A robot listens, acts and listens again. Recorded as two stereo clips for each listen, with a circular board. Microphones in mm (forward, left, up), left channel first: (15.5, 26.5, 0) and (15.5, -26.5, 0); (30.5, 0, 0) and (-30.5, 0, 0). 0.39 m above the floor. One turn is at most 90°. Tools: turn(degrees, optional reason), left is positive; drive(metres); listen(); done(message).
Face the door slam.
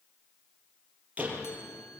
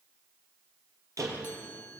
turn(degrees=-90, reason="The door slam: 150° right.")
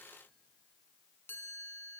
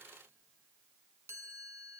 turn(degrees=-60, reason="Nothing new. It was at 60° right.")
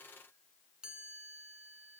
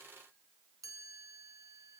done("I heard a door slam from this way, but can't make it out now.")